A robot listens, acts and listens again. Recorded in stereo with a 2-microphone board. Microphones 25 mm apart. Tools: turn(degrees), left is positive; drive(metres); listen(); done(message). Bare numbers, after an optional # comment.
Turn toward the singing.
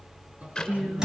# The singing: about 75° right or 105° right.
turn(-75)
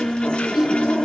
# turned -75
done("Facing the singing.")